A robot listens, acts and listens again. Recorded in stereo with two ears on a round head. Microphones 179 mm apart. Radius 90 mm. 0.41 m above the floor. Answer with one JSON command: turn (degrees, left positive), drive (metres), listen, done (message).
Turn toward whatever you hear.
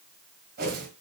{"turn": -55}
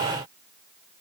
{"listen": true}
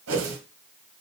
{"turn": -70}
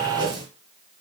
{"turn": -20}
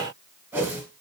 {"turn": -10}
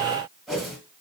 {"done": "Found it: a whoosh, straight ahead."}